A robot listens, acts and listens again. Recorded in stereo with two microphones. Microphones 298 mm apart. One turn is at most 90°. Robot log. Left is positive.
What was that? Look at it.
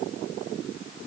cmd idle
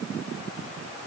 cmd idle
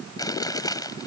cmd yaw +30
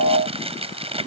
note: So it is at 20° right.
cmd yaw -20
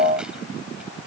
cmd idle
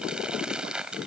end: Facing the chewing.